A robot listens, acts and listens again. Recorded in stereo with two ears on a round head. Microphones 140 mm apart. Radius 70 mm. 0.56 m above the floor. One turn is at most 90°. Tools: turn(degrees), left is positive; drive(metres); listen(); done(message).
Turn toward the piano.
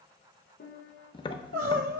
turn(degrees=70)
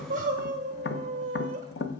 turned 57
listen()
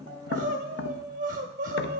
listen()
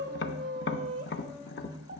done("I heard a piano, but can't make it out now. It was about 10° left or 55° left.")